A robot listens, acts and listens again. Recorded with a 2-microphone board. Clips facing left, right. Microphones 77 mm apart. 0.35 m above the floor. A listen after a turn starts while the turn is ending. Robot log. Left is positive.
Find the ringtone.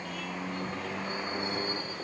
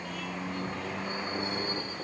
cmd idle
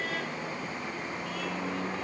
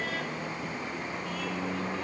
cmd idle
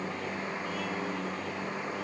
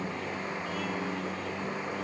end: I can't make out a ringtone.